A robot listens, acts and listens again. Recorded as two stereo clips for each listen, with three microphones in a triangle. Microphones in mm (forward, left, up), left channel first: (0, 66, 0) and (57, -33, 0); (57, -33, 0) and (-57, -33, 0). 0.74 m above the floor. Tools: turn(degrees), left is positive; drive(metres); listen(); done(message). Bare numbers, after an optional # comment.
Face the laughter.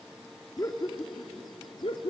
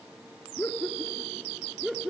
# The laughter: 95° left.
turn(95)
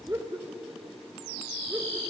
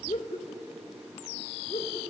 # The laughter is now 15° left.
turn(15)
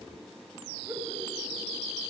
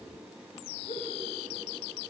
done("Found it: laughter, straight ahead.")